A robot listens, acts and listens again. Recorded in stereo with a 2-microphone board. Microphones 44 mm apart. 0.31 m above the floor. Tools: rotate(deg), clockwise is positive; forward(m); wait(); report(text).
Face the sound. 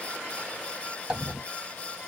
rotate(30)
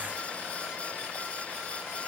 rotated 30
wait()
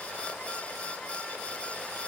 report("I heard a dropped coin, but can't make it out now. It was about straight ahead or 120° right.")